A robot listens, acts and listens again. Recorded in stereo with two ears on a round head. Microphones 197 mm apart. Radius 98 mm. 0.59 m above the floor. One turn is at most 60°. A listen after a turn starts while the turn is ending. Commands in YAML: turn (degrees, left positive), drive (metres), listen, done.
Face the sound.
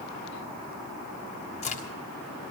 turn: 30
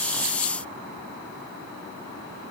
listen: true
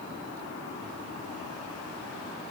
done: "I heard a crack, but can't make it out now. It was about straight ahead or 120° left."